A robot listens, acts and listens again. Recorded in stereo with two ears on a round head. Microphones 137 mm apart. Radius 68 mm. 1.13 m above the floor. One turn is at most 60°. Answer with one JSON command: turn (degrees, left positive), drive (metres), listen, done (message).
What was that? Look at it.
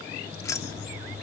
{"turn": 20}
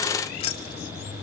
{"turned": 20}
{"turn": 60}
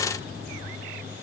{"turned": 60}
{"turn": 60}
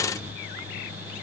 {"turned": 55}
{"turn": 25}
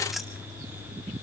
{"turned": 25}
{"done": "I heard keys jangling from this way, but can't make it out now."}